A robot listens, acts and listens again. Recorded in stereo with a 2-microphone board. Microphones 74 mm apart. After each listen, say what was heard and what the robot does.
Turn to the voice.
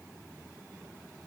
Keep listening.
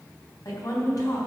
The woman speaking: about 60° left or 120° left. Turn 60° left.
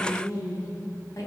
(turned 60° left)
So it is at 55° left. Turn 55° left.
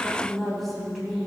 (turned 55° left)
Facing the woman speaking.